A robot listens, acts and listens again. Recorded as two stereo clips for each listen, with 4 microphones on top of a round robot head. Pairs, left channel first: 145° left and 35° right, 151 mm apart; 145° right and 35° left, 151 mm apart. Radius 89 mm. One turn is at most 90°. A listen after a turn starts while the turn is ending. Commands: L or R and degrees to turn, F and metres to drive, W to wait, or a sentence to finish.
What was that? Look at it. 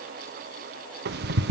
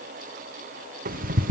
Facing the ticking.